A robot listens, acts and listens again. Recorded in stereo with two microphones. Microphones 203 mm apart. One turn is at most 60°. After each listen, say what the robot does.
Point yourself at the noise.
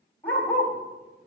Turn 30° left.
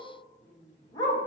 Turn 60° left.
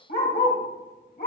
Turn 60° left.
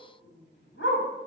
Turn 60° left.
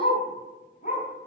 Turn 45° left.
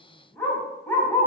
Turn 10° left.
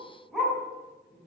Facing the dog barking.